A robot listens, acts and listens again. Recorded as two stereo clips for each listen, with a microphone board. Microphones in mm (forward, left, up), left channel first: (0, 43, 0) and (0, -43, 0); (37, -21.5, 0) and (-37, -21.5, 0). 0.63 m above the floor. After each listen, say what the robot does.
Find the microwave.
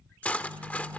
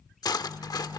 Turn 120° right.
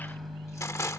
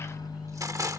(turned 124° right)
Found it: a microwave, straight ahead.